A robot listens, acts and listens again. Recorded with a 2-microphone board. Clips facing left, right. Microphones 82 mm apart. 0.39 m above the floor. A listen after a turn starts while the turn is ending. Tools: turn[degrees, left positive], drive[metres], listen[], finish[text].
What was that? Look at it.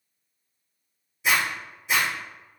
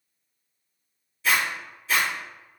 Thought: The zipper: about 20° left or 160° left.
Action: turn[20]
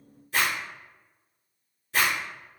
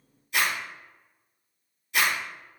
Thought: So it is at 140° left.
Action: turn[140]
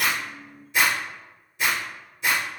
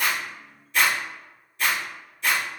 Thought: The zipper is now 15° left.
Action: turn[15]
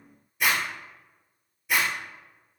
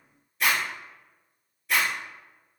Action: finish[Facing the zipper, 1 to 2 m away.]